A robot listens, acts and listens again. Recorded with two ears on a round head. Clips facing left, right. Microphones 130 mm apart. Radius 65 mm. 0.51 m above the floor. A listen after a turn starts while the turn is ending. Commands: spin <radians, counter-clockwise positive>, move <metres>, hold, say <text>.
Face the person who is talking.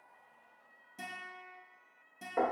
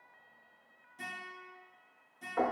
hold
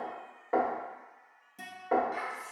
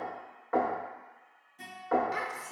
spin -1.22
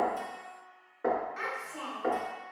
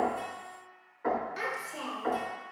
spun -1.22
spin -0.61
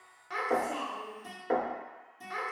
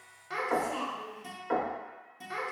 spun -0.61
say Found it: a child speaking, straight ahead.